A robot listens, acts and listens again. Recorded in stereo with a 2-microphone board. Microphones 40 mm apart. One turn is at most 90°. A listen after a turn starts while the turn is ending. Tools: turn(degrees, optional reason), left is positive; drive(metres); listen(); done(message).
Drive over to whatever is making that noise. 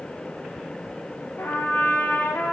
turn(degrees=60, reason="The trumpet: about 60° left or 120° left.")
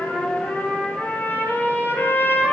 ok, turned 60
turn(degrees=60, reason="So it is at 60° left.")
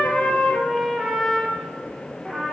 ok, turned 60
turn(degrees=10, reason="The trumpet is now 10° left.")
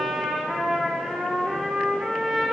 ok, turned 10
drive(metres=1.0)
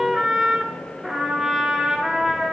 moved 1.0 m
turn(degrees=-10, reason="The trumpet is now 10° right.")
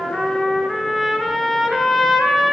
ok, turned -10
drive(metres=1.0)
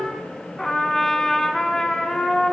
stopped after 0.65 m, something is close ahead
turn(degrees=10, reason="The trumpet is now 10° left.")
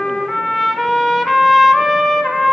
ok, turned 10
done("Arrived at the trumpet, straight ahead.")